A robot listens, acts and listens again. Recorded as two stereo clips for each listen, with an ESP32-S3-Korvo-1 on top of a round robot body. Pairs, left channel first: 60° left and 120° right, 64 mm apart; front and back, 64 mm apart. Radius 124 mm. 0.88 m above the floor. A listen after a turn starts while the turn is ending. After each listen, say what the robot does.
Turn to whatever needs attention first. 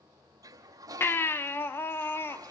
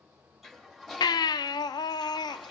Found it: a baby crying, straight ahead, 1 to 2 m away.